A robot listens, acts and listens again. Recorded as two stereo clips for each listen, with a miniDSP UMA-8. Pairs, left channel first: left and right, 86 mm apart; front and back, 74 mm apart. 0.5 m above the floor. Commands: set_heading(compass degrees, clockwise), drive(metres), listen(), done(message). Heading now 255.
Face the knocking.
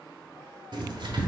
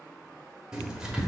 listen()
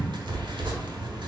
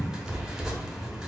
listen()
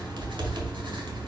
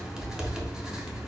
done("I can't make out knocking, only writing.")